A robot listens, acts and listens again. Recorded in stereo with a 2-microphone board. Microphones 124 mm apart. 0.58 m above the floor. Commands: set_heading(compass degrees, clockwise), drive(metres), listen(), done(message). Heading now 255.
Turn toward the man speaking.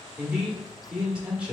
set_heading(285)
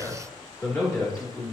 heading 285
set_heading(265)
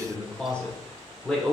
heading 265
set_heading(255)
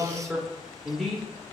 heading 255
done("Facing the man speaking, 1 to 2 m away.")